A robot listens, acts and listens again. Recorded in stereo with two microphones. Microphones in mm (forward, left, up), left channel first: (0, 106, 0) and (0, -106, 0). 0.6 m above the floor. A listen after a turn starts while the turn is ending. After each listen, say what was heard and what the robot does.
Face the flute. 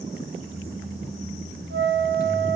The flute: about 60° right or 120° right. Turn 60° right.
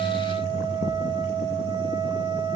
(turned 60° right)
So it is at 25° right. Turn 25° right.
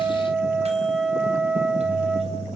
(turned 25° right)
Facing the flute, 2 to 4 m away.